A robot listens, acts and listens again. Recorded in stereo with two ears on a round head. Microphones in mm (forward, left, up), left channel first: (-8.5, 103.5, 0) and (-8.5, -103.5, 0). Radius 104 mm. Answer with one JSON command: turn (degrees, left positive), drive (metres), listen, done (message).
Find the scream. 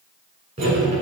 {"listen": true}
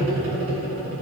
{"listen": true}
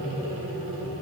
{"done": "I can't make out a scream to turn to."}